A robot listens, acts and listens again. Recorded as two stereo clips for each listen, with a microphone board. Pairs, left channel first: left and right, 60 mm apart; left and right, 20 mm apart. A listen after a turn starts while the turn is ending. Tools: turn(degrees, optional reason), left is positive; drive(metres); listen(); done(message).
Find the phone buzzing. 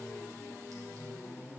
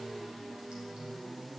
listen()
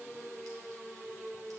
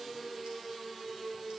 listen()
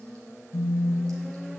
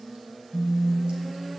turn(degrees=65, reason="The phone buzzing: about 65° left or 115° left.")
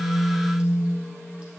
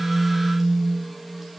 turn(degrees=40, reason="So it is at 40° left.")
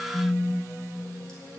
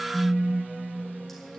turn(degrees=10, reason="The phone buzzing is now 10° left.")
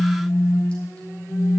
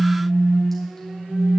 done("Facing the phone buzzing.")